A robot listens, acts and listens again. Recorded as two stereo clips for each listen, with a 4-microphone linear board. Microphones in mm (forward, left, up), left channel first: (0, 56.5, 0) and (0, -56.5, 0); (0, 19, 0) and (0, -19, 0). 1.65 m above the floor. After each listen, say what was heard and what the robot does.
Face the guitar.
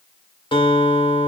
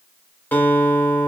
The guitar: about 50° left or 130° left. Turn 50° left.
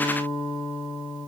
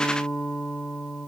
So it is at 65° left. Turn 65° left.
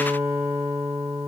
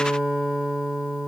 The guitar is now 10° right. Turn 10° right.
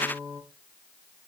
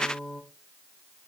Facing the guitar.